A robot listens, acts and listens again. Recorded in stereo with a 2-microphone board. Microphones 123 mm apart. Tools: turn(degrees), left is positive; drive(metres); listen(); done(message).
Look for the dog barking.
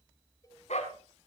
turn(degrees=65)
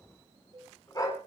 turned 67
turn(degrees=30)
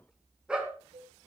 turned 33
turn(degrees=-10)
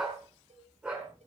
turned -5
turn(degrees=-10)
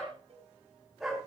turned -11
done("Facing the dog barking, over 4 m away.")